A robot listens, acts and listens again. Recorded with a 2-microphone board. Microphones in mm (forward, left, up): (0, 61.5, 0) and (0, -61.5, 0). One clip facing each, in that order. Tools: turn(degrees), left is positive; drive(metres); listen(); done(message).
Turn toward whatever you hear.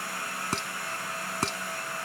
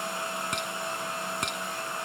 turn(degrees=35)
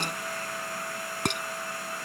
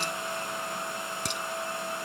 turn(degrees=105)
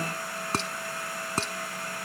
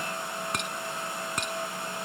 turn(degrees=35)
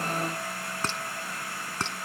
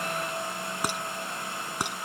turn(degrees=-15)
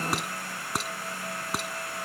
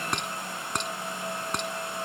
done("Facing the dishes clattering.")